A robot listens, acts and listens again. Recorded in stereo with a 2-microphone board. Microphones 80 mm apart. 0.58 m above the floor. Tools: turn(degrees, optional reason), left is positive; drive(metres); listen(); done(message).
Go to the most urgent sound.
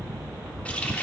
listen()
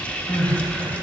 turn(degrees=70, reason="The crying: about 70° left or 110° left.")
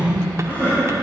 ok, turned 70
turn(degrees=30, reason="So it is at 30° left.")
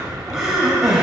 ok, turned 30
turn(degrees=-10, reason="The crying is now 10° right.")
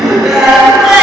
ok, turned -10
drive(metres=1.0)
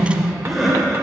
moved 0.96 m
drive(metres=1.0)
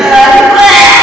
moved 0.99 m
turn(degrees=-10, reason="The crying is now 10° right.")
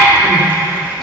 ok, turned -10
drive(metres=1.0)
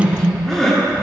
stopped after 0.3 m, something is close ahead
turn(degrees=10, reason="The crying is now 10° left.")
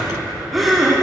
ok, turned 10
done("Arrived at the crying, straight ahead.")